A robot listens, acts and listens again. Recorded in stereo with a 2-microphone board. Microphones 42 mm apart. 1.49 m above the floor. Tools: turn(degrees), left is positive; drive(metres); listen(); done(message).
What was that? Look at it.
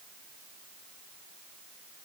listen()
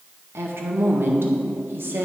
turn(degrees=-60)
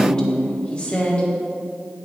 turn(degrees=30)
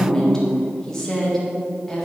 turn(degrees=10)
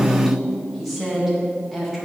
done("Found it: a woman speaking, straight ahead, 1 to 2 m away.")